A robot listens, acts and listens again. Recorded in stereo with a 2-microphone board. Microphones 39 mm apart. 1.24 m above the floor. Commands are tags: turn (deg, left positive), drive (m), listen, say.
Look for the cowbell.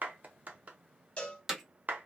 <turn deg="30"/>
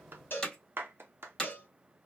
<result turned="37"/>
<turn deg="105"/>
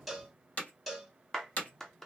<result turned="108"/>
<say>Facing the cowbell.</say>